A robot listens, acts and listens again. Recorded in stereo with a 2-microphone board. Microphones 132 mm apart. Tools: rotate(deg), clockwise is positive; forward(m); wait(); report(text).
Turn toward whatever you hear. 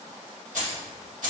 rotate(90)
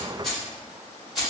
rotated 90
report("Found it: keys jangling, straight ahead, 2 to 4 m away.")